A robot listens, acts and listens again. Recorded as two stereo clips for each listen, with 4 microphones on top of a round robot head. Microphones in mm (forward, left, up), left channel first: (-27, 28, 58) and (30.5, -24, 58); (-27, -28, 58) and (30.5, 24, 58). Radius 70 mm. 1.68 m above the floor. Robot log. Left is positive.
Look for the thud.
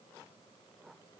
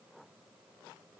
cmd idle
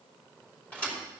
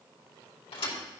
note: The thud: 150° right.
cmd yaw -150
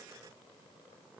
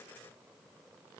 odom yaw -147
end: I heard a thud from this way, but can't make it out now.